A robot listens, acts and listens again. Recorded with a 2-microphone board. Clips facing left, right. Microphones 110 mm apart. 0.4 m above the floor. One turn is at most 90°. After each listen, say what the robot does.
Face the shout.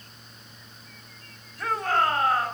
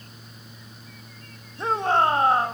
Turn 25° right.
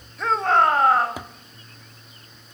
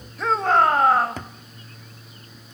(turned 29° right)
Facing the shout, 2 to 4 m away.